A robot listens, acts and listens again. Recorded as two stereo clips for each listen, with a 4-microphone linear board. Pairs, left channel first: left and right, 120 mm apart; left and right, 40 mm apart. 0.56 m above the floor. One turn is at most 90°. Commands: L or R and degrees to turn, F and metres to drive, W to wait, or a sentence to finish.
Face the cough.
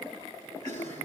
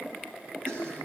R75
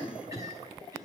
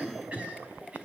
R30
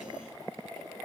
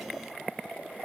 W
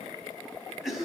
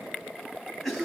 Facing the cough, over 4 m away.